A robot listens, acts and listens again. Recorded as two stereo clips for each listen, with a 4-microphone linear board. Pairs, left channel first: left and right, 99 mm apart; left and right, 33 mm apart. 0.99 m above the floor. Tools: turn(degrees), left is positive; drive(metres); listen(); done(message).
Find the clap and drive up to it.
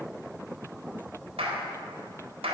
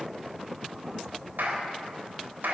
turn(degrees=-90)
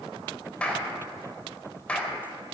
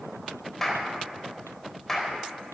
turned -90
turn(degrees=10)
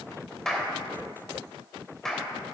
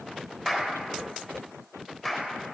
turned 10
drive(metres=1.0)
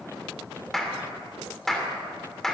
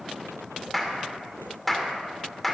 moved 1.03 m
drive(metres=1.0)
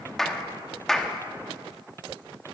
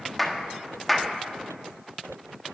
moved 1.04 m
drive(metres=1.0)
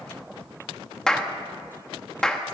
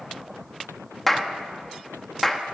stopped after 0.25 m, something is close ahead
done("Arrived at the clap, straight ahead.")